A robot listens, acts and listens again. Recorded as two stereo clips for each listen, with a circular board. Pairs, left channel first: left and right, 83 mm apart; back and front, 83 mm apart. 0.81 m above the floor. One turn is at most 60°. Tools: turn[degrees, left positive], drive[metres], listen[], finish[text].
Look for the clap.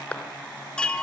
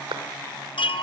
Thought: The clap: 15° left.
Action: turn[15]
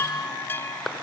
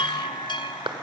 Action: finish[Found it: a clap, straight ahead.]